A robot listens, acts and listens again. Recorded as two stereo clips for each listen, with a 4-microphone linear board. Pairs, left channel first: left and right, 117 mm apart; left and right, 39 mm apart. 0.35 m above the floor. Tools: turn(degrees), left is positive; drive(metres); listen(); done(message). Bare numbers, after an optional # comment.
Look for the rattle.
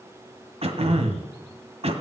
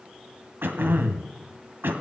listen()
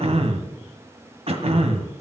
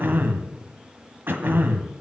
listen()
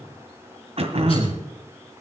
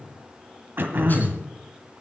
done("I can't make out a rattle, only throat clearing.")